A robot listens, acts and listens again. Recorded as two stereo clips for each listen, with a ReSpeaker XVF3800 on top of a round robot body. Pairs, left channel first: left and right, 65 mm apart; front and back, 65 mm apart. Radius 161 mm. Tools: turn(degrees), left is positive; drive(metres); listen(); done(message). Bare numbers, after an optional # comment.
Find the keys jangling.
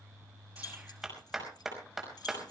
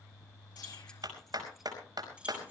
# The keys jangling: 115° left.
turn(115)
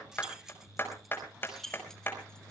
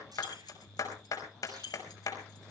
done("Found it: keys jangling, straight ahead, 2 to 4 m away.")